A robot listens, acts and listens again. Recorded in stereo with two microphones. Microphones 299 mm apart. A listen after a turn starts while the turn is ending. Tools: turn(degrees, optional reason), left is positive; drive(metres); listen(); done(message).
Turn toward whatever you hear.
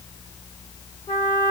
turn(degrees=30)
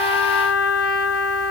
turn(degrees=145, reason="So it is at 145° left.")
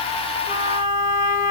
done("Found it: a trumpet, straight ahead.")